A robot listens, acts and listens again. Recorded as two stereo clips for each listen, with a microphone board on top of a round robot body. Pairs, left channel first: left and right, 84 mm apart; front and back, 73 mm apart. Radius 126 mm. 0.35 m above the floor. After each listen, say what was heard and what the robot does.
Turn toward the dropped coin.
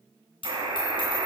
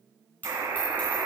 The dropped coin: 70° left. Turn 70° left.
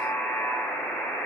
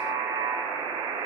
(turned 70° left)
I heard a dropped coin from this way, but can't make it out now.